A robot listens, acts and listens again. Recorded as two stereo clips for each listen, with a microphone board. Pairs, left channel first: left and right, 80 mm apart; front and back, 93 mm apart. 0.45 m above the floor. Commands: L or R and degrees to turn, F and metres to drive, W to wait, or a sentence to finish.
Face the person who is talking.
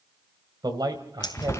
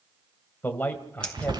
R70
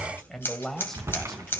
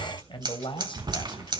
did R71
Facing the man speaking.